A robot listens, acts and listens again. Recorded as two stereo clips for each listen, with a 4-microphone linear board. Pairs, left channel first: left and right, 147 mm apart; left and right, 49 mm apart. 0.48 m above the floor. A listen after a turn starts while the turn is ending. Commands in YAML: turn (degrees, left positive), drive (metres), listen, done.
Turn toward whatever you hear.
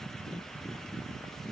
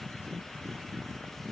listen: true
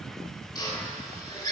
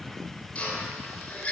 turn: 25
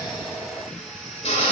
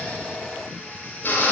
turn: 120
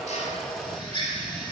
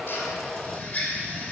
turn: 40
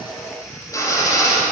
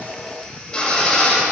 turn: 25
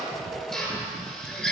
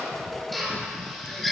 done: "Found it: a drill, straight ahead, 2 to 4 m away."